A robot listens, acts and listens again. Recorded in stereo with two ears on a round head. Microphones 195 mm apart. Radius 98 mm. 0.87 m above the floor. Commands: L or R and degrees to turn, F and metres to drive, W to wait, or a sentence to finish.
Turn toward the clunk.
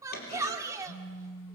L45
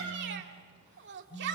W
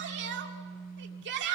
I heard a clunk, but can't make it out now. It was about straight ahead or 90° left.